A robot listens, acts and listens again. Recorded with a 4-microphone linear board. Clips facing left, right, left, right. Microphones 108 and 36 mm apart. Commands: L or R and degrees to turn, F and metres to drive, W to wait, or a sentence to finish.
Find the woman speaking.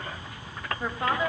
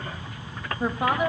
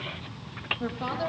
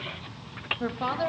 R15
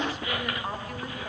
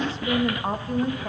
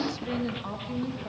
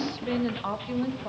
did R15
R150
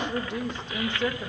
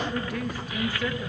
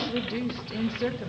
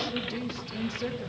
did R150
L25
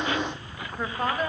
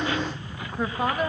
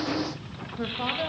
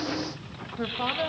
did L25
Facing the woman speaking, 2 to 4 m away.